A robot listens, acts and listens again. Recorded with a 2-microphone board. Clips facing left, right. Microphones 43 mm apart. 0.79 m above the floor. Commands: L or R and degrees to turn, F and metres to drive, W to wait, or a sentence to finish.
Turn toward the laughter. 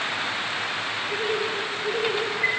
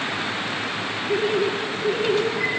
R15
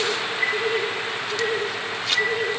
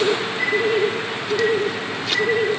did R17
R30
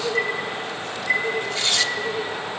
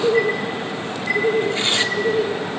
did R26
R25
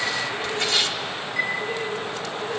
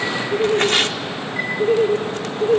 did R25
R130
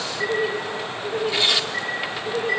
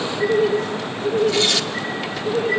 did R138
L10
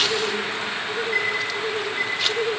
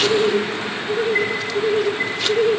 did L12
Facing the laughter, 2 to 4 m away.